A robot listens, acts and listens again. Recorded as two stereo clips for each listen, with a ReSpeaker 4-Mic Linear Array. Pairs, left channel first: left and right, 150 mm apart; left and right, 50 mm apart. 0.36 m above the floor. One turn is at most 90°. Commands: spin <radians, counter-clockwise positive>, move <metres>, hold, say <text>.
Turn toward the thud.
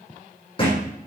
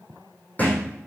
spin 0.61
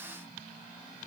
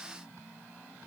hold
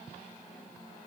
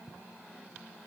say I heard a thud, but can't make it out now. It was about straight ahead or 110° left.